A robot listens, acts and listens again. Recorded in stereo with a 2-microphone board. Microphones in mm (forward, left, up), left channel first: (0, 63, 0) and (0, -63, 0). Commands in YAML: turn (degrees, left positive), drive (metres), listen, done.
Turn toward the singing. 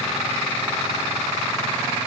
listen: true
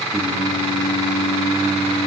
turn: -90
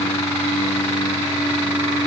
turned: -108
done: "Facing the singing."